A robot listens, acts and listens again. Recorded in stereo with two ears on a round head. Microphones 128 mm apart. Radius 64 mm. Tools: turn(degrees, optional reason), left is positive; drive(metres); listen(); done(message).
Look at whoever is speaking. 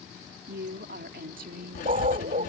turn(degrees=-70, reason="The woman speaking: about 70° right or 110° right.")
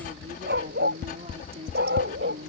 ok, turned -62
turn(degrees=-45, reason="So it is at 45° right.")
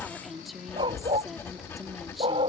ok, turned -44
done("Facing the woman speaking.")